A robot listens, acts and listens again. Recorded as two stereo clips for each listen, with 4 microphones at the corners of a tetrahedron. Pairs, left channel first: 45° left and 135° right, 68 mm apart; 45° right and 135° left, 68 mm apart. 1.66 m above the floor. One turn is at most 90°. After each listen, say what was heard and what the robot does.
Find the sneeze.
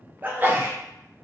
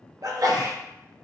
The sneeze: 165° left. Turn 90° left.
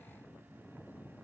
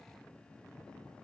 Nothing new. It was at 75° left. Turn 75° left.
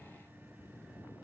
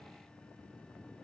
Facing where the sneeze came from. I can't hear it now.